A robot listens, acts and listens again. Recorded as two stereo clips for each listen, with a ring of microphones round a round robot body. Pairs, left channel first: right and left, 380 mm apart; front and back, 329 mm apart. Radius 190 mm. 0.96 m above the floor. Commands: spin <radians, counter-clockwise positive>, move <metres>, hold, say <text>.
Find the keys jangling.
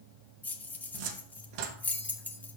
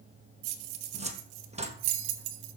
spin -3.05
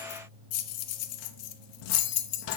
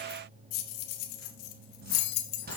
spin -0.70
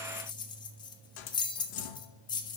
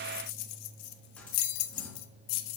spin -0.17
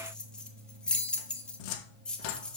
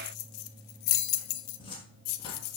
say Found it: keys jangling, straight ahead.